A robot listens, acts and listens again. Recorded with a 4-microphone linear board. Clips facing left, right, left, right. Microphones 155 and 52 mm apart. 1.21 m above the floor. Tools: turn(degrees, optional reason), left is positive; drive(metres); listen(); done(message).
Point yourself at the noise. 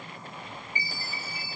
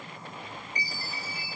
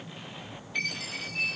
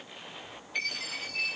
turn(degrees=30)
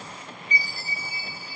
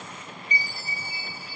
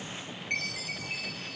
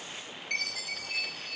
turn(degrees=150, reason="So it is at 150° left.")
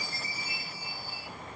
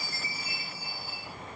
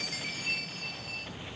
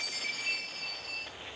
done("Facing the chime.")